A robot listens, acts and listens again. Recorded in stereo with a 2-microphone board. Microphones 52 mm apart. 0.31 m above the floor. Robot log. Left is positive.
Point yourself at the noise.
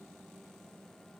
cmd idle
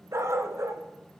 note: The dog barking: about 65° right or 115° right.
cmd yaw -65
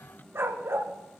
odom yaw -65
note: So it is at 50° right.
cmd yaw -50
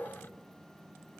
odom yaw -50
cmd idle
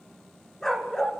note: The dog barking is now 10° left.
cmd yaw +10
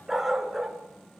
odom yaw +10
end: Found it: a dog barking, straight ahead.